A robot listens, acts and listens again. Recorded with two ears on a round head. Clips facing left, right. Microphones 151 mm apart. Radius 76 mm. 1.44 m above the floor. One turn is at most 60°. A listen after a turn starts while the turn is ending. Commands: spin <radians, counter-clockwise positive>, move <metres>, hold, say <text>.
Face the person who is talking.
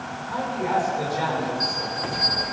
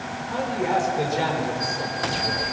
spin -0.52
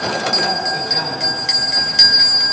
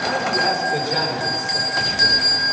hold
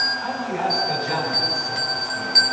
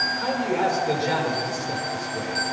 spin -1.05
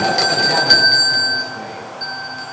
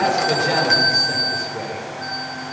spin -1.05
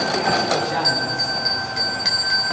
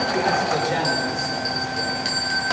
spin -0.44
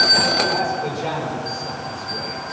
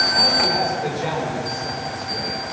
say Found it: a man speaking, straight ahead, over 4 m away.